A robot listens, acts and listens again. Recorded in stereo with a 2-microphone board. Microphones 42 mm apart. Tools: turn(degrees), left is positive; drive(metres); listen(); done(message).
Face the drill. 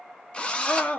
turn(degrees=30)
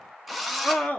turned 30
done("Facing the drill, under 1 m away.")